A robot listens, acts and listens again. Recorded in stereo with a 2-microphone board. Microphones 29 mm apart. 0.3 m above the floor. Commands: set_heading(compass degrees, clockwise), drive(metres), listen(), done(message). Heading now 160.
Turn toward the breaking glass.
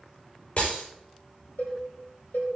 set_heading(115)
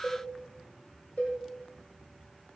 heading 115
listen()
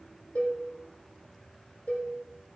done("I heard breaking glass, but can't make it out now. It was about straight ahead or 90° left.")